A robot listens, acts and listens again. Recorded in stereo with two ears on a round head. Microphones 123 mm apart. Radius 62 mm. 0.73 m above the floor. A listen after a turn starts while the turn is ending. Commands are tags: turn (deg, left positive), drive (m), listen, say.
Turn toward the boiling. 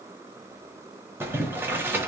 <turn deg="-15"/>
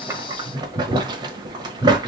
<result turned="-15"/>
<turn deg="-150"/>
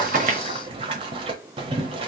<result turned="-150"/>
<turn deg="-40"/>
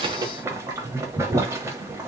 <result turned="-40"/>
<turn deg="-20"/>
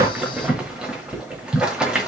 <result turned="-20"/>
<say>Facing the boiling.</say>